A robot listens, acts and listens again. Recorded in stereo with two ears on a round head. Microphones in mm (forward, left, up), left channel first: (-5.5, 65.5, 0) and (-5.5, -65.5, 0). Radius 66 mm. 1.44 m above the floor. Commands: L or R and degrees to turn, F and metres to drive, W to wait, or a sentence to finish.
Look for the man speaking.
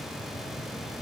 W
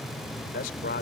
L70
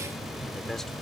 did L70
W
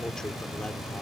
W
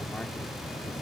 I heard a man speaking, but can't make it out now. It was about straight ahead or 40° left.